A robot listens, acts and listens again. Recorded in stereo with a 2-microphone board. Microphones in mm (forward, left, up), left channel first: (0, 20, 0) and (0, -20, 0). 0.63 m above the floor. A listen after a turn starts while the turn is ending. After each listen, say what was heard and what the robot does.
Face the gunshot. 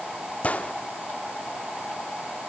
The gunshot: about 40° left or 140° left. Turn 40° left.
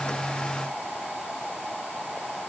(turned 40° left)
Keep listening.
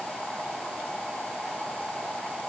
I heard a gunshot, but can't make it out now. It was about straight ahead or 100° left.